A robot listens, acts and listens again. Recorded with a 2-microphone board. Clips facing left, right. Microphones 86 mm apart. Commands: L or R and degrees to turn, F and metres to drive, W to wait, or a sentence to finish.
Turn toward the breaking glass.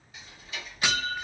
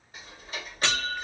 L30
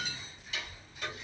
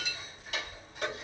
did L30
L135
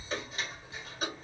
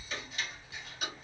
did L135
I heard breaking glass from this way, but can't make it out now.